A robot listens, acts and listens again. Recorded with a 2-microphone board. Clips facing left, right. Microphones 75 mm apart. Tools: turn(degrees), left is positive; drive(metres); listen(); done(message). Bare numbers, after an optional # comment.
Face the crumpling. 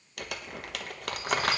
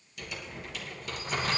# The crumpling: about 65° left or 115° left.
turn(65)
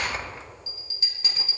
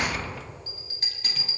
# So it is at 30° left.
turn(30)
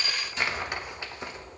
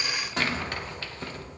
# The crumpling is now 15° left.
turn(15)
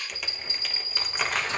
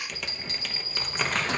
done("Facing the crumpling.")